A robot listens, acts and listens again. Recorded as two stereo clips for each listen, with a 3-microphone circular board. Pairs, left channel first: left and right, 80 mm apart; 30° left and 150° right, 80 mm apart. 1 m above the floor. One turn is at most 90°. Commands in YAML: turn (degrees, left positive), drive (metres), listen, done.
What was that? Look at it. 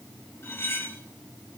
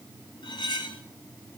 turn: 30
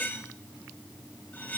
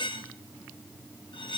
turn: 25
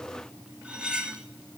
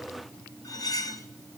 turn: -10
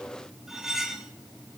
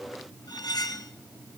done: "Found it: cutlery clinking, straight ahead, under 1 m away."